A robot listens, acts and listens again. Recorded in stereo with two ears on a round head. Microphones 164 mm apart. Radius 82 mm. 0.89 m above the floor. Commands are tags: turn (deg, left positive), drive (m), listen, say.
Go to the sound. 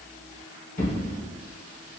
<turn deg="50"/>
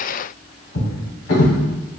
<turn deg="80"/>
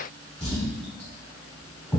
<drive m="1.0"/>
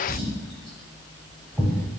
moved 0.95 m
<drive m="1.0"/>
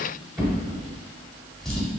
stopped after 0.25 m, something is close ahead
<say>I am next to the drawer.</say>